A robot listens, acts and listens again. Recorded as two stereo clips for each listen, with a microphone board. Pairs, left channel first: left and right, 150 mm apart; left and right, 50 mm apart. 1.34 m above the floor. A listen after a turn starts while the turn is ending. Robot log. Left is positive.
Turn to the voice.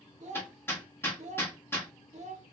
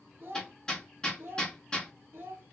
note: The child speaking: about 50° right or 130° right.
cmd yaw -50
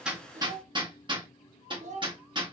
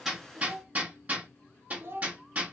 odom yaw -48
note: So it is at 65° right.
cmd yaw -65
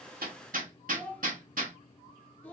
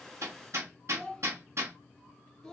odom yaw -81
note: The child speaking is now 15° left.
cmd yaw +15
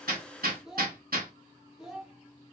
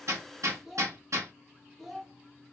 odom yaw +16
end: Facing the child speaking, under 1 m away.